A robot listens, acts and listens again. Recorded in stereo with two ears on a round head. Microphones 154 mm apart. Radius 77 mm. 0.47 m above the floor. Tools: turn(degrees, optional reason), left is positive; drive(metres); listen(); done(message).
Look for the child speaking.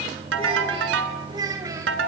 turn(degrees=-20, reason="The child speaking: about 20° right or 160° right.")
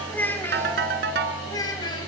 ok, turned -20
turn(degrees=25, reason="So it is at 25° left.")
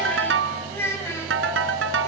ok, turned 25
turn(degrees=15, reason="The child speaking is now 15° left.")
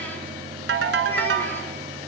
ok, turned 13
listen()
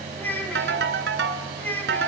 turn(degrees=10, reason="The child speaking is now 10° left.")
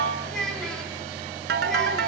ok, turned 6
done("Found it: a child speaking, straight ahead, 2 to 4 m away.")